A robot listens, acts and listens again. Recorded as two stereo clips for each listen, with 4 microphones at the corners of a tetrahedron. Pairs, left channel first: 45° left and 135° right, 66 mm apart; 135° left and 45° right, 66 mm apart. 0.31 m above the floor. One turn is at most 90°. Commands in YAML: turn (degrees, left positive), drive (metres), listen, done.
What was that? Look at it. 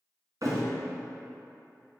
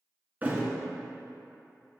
turn: -90
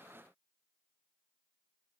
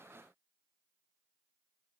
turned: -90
turn: -20
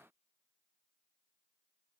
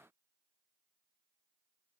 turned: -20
done: "I heard a thud from this way, but can't make it out now."